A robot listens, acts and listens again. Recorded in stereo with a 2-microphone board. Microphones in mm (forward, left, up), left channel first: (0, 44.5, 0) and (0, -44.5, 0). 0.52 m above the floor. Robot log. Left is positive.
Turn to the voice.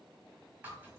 cmd idle
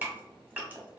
cmd idle
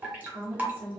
note: The woman speaking: about 60° right or 120° right.
cmd yaw -60
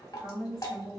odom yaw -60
note: So it is at 25° right.
cmd yaw -25
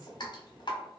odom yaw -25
note: The woman speaking is now 10° right.
cmd yaw -10
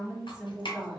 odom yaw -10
end: Facing the woman speaking.